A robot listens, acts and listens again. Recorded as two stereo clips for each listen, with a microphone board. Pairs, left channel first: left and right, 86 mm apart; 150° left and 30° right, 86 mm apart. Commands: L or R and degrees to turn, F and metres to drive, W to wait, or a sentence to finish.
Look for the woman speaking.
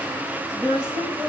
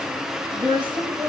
R55
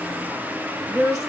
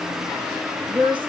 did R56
Found it: a woman speaking, straight ahead.